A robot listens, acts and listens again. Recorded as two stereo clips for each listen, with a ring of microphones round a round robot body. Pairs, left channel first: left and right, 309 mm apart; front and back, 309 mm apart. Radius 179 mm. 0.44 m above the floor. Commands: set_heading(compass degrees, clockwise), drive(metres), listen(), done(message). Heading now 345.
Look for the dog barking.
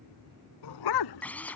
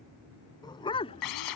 set_heading(270)
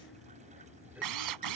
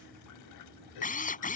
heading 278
set_heading(268)
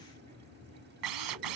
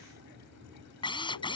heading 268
listen()
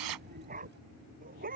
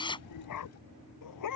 set_heading(293)
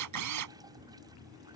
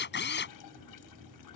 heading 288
listen()
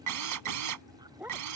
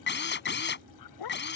done("Facing the dog barking.")